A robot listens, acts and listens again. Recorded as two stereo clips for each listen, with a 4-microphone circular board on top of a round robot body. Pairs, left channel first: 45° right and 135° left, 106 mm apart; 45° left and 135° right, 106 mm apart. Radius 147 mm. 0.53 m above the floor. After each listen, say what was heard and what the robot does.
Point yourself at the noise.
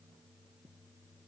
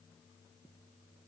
Keep listening.
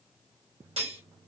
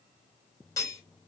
The cutlery clinking: 100° left. Turn 100° left.
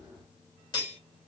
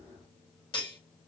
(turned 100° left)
Facing the cutlery clinking.